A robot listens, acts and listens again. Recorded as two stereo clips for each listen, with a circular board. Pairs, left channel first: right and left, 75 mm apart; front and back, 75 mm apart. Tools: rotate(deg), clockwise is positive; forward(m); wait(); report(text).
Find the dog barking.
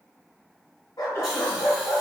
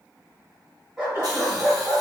rotate(110)
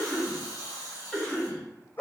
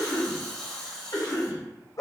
rotate(30)
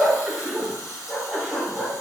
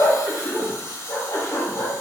rotate(20)
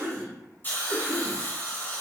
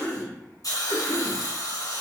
wait()
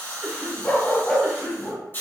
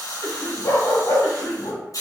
rotate(10)
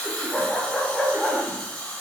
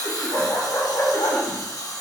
report("Found it: a dog barking, straight ahead, 1 to 2 m away.")